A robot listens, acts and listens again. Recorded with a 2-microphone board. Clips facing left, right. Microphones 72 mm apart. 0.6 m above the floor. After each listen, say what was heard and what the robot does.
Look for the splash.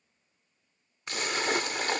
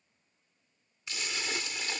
The splash: about 50° left or 130° left. Turn 50° left.
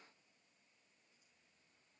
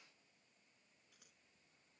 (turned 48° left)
Keep listening.
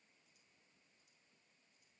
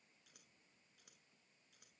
I heard a splash, but can't make it out now. It was about straight ahead or 85° left.